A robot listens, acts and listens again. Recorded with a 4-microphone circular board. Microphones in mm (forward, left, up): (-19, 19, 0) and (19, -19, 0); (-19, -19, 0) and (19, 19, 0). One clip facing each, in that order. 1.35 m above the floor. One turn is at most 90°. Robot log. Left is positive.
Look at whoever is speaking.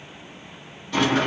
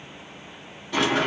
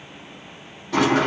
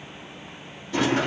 cmd idle
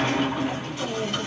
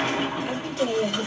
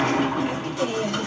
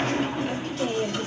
note: The woman speaking: 50° right.
cmd yaw -50
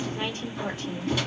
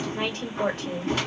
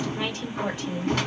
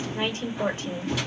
note: The woman speaking is now 10° right.
cmd yaw -10
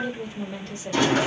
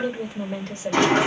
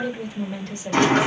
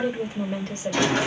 end: Facing the woman speaking.